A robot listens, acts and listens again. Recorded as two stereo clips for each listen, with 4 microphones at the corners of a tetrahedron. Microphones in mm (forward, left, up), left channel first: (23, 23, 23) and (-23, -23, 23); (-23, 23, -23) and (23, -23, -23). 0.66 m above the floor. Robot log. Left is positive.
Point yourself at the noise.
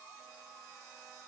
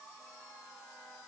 cmd idle
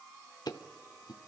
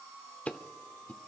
note: The ticking: 65° left.
cmd yaw +65
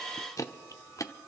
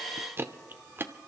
note: The ticking is now 10° left.
cmd yaw +10
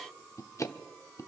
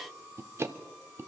end: Facing the ticking, under 1 m away.